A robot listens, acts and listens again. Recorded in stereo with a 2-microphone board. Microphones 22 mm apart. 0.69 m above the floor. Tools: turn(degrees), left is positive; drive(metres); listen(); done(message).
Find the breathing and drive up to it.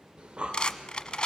turn(degrees=-60)
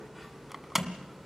drive(metres=1.0)
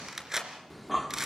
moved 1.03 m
drive(metres=1.0)
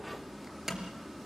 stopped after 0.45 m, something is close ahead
done("Arrived at the breathing, straight ahead.")